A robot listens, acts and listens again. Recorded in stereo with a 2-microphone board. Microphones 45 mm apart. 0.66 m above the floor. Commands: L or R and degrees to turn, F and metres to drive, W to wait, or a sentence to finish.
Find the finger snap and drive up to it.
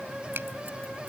R60
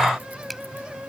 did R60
W
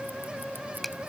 F1.0
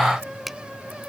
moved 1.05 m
F1.0
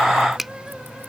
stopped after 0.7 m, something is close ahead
Arrived at the finger snap, straight ahead.